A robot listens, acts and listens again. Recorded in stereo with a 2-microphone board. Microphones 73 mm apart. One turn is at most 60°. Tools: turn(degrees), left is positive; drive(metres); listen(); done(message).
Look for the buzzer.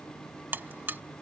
turn(degrees=-30)
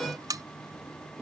turn(degrees=-60)
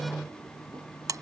turn(degrees=-55)
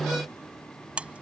turn(degrees=-20)
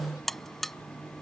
done("Found it: a buzzer, straight ahead.")